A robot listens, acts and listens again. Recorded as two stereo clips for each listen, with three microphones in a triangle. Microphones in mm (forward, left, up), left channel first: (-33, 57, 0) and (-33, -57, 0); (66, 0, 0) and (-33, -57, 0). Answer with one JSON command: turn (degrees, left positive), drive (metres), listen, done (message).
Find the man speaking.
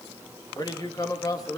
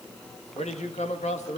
{"turn": 30}
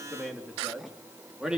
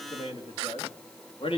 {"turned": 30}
{"done": "Found it: a man speaking, straight ahead."}